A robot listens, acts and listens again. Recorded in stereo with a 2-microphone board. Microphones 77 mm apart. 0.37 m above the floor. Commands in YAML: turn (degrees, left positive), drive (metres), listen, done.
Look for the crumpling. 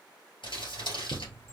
turn: 90
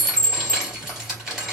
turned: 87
done: "Facing the crumpling."